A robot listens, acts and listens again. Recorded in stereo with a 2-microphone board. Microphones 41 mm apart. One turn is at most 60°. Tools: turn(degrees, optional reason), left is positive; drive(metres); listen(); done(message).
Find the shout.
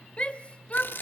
turn(degrees=30, reason="The shout: about 30° left or 150° left.")
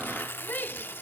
turn(degrees=60, reason="So it is at 120° left.")
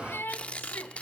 turn(degrees=60, reason="The shout is now 80° left.")
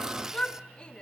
turn(degrees=30, reason="The shout is now 30° left.")
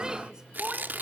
turn(degrees=-15, reason="The shout is now 15° right.")
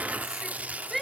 done("Found it: a shout, straight ahead.")